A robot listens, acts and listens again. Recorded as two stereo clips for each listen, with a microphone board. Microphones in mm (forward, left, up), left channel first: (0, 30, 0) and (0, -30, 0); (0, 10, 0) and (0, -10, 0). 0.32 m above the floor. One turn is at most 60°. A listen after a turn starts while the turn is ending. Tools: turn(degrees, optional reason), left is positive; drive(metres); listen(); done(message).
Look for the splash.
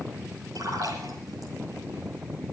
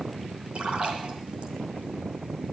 turn(degrees=-60)
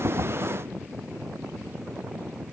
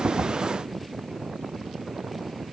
turn(degrees=-30, reason="Nothing new. It was at 30° right.")
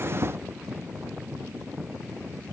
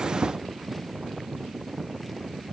done("Facing where the splash came from. I can't hear it now.")